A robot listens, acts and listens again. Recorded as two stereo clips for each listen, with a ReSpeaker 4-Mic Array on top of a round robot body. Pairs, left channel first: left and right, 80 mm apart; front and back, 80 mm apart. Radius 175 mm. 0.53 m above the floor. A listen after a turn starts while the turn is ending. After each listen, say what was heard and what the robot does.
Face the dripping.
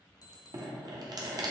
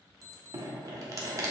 The dripping: 130° right. Turn 130° right.
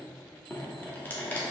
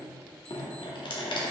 The dripping is now 20° left. Turn 20° left.
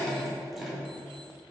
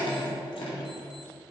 Found it: dripping, straight ahead.